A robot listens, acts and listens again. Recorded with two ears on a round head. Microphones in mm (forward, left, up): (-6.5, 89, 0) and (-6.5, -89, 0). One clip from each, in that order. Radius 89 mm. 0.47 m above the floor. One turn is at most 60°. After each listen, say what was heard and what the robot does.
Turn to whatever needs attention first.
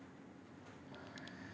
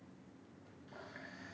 Keep listening.
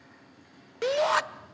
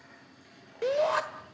The shout: about 40° left or 140° left. Turn 40° left.
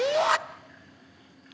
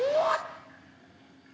So it is at 85° left. Turn 60° left.
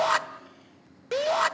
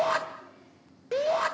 The shout is now 40° left. Turn 40° left.
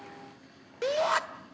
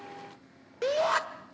The shout is now 10° left. Turn 10° left.
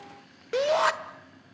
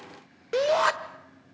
Found it: a shout, straight ahead, 1 to 2 m away.